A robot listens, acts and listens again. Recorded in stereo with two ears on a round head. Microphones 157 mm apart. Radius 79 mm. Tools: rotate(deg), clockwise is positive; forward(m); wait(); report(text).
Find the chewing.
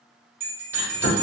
rotate(-60)
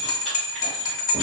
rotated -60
wait()
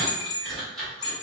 report("Found it: chewing, straight ahead.")